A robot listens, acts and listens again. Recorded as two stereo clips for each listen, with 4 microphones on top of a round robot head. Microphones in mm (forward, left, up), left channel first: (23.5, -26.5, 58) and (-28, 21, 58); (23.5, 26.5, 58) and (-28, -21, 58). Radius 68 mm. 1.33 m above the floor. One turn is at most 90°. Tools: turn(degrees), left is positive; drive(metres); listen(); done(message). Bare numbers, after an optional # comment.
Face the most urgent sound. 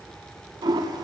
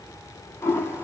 listen()
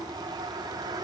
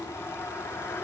listen()
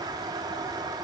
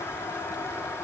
done("I can't make out anything urgent to turn to.")